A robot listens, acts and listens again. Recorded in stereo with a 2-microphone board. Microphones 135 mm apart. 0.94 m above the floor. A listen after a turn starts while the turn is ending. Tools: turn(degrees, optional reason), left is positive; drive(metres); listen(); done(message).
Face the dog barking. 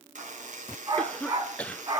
turn(degrees=-45, reason="The dog barking: about 45° right or 135° right.")
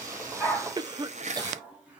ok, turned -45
done("Found it: a dog barking, straight ahead, 2 to 4 m away.")